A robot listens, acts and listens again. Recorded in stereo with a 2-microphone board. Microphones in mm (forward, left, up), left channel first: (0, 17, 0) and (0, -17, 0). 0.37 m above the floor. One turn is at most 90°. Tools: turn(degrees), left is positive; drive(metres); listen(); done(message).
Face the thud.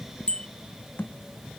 turn(degrees=90)
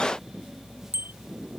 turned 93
done("Facing where the thud came from. I can't hear it now.")